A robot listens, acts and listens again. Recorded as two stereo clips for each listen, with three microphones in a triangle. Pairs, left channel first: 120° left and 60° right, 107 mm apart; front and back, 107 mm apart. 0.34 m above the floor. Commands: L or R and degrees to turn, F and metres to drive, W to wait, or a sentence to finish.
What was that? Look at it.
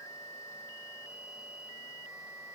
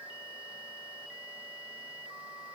W
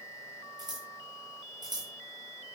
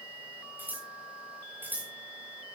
R105
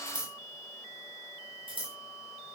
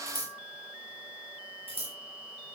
R25
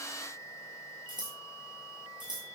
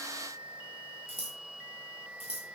R15
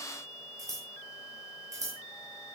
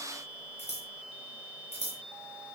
Facing the scissors.